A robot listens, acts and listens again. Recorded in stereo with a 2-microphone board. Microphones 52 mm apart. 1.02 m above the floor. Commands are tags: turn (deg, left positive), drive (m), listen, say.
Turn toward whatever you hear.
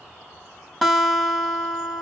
<turn deg="30"/>
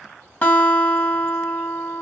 <turn deg="145"/>
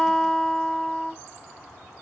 <turn deg="10"/>
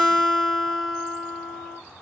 <say>Facing the guitar.</say>